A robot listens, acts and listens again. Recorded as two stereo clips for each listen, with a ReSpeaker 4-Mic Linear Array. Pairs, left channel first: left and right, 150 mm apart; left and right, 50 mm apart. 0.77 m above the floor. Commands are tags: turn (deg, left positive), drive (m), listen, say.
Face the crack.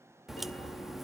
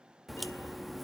<turn deg="30"/>
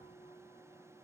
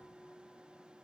<listen/>
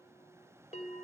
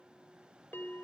<say>I heard a crack, but can't make it out now. It was about 30° right or 150° left.</say>